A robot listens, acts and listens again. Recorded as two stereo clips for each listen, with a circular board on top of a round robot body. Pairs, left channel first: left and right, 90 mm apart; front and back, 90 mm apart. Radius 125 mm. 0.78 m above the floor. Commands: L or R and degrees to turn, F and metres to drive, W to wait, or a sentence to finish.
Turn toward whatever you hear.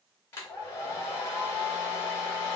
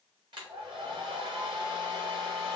L150
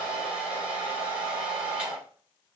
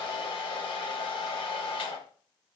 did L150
R10
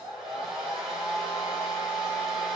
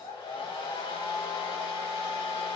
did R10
Found it: a hair dryer, straight ahead.